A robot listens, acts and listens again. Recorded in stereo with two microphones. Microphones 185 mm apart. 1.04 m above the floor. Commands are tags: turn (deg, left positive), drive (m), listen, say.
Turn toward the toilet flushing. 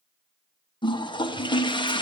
<turn deg="25"/>
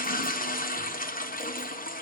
<turn deg="125"/>
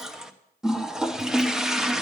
<say>Found it: a toilet flushing, straight ahead, under 1 m away.</say>